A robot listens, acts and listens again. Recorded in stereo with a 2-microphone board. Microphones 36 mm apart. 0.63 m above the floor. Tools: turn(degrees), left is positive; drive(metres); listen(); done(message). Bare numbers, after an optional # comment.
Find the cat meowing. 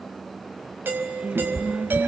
# The cat meowing: about 55° right or 125° right.
turn(-55)
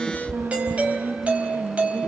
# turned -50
# So it is at 15° right.
turn(-15)
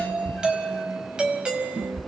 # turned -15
done("Facing the cat meowing.")